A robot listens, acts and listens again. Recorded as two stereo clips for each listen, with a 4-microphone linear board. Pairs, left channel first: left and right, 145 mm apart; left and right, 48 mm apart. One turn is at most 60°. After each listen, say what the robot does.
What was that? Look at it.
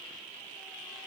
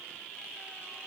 Keep listening.
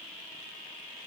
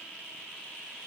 Keep listening.
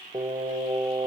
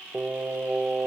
Turn 30° right.
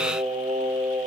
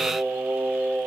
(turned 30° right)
Turn 60° right.
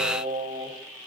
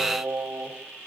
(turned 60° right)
Turn 60° right.
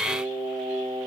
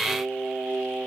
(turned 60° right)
Turn 50° right.
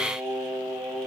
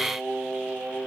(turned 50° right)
Turn 25° right.
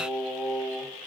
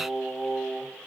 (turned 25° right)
Turn 10° right.
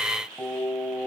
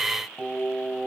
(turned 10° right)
Found it: singing, straight ahead, 2 to 4 m away.